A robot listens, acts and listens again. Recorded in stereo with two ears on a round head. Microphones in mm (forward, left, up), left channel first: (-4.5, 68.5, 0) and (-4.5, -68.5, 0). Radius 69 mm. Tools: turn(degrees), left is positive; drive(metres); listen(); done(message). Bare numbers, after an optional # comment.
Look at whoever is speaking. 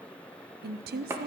# The woman speaking: about 75° right or 105° right.
turn(-75)
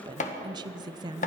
# So it is at 30° right.
turn(-30)
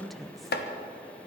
done("Facing the woman speaking, under 1 m away.")